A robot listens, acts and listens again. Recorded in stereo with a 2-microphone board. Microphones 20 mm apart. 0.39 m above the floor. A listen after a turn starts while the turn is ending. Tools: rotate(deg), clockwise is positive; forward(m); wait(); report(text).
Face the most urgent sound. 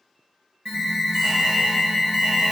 rotate(45)
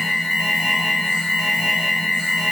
rotate(10)
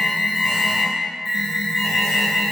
report("Facing the alarm.")